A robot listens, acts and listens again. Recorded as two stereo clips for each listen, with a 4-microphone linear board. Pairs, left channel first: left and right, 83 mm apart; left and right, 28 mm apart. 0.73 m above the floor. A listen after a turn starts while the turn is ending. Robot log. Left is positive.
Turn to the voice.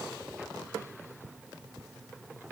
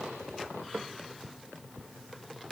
cmd idle
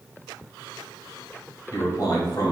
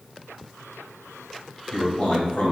note: The man speaking: about 50° left or 130° left.
cmd yaw +50
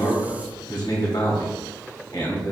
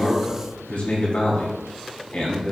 note: So it is at 75° left.
cmd yaw +75
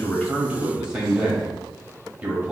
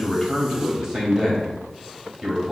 note: The man speaking is now 15° right.
cmd yaw -15
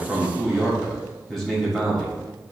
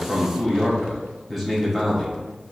end: Facing the man speaking, 1 to 2 m away.